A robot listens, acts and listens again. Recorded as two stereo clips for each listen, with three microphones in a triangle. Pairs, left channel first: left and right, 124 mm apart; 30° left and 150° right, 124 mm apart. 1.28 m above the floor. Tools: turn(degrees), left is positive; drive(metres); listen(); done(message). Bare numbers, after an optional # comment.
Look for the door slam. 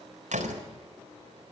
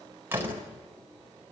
# The door slam: 80° right.
turn(-80)
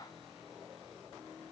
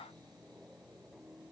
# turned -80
done("I heard a door slam from this way, but can't make it out now.")